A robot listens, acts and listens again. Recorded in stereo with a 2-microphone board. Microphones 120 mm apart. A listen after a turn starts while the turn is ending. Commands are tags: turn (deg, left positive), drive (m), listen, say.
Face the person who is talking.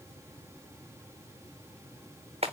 <listen/>
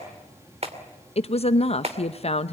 <turn deg="55"/>
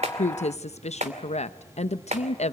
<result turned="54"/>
<turn deg="65"/>
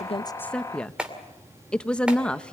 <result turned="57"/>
<turn deg="10"/>
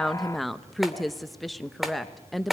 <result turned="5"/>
<say>Found it: a woman speaking, straight ahead, under 1 m away.</say>